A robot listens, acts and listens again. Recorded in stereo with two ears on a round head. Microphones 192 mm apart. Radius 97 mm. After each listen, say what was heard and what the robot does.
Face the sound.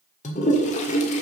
The toilet flushing: about 35° left or 145° left. Turn 35° left.
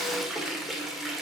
Facing the toilet flushing.